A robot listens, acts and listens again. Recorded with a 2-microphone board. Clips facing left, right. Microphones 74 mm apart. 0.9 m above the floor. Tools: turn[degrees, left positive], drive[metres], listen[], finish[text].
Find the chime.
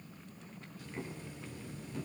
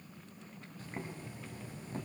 Action: listen[]
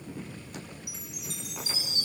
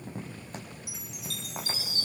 Thought: The chime: about 20° left or 160° left.
Action: turn[20]
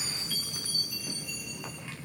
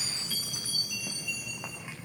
Thought: So it is at 135° left.
Action: turn[135]
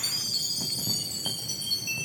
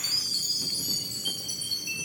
Action: finish[Facing the chime, 2 to 4 m away.]